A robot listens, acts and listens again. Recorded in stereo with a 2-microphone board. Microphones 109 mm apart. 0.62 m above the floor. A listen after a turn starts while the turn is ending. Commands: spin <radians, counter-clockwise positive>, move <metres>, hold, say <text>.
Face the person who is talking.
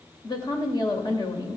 spin 0.79
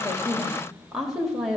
say Facing the woman speaking.